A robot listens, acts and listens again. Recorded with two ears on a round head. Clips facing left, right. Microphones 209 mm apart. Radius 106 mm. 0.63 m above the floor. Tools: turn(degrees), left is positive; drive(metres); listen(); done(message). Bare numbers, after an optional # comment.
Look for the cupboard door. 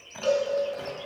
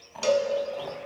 listen()
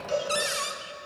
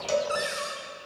# The cupboard door: about 45° left or 135° left.
turn(45)
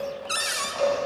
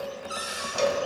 # So it is at 85° left.
turn(85)
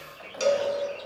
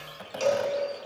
listen()
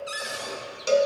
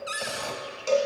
done("Found it: a cupboard door, straight ahead.")